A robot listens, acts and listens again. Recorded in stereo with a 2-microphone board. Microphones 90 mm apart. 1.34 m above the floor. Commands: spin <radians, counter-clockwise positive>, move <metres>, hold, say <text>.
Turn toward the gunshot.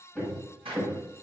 spin -1.57
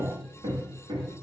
say Facing where the gunshot came from. I can't hear it now.